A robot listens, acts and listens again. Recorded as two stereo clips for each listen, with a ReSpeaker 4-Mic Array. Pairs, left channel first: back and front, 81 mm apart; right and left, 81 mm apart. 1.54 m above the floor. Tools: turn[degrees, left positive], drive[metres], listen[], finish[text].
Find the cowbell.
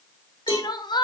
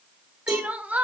Thought: The cowbell: 115° left.
Action: turn[115]
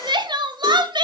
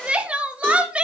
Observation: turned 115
Action: listen[]
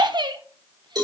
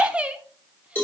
Thought: The cowbell is now 30° right.
Action: turn[-30]
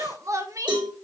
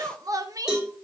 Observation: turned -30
Action: finish[Facing the cowbell.]